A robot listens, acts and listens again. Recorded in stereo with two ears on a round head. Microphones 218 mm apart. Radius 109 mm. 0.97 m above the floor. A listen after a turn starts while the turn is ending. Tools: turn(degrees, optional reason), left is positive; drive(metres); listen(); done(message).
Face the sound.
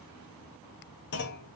turn(degrees=50, reason="The clunk: about 50° left or 130° left.")
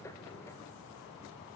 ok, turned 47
listen()
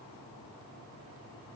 done("I heard a clunk, but can't make it out now. It was about straight ahead or 85° left.")